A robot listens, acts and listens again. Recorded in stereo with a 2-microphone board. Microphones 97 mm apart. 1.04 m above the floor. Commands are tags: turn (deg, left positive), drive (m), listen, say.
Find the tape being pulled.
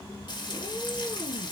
<listen/>
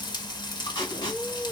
<turn deg="50"/>
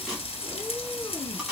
<say>Facing the tape being pulled, 2 to 4 m away.</say>